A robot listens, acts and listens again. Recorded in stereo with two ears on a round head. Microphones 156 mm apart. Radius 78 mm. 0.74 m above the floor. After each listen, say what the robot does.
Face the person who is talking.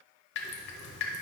Keep listening.
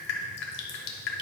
Keep listening.
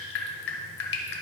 I can't make out anyone speaking, only dripping.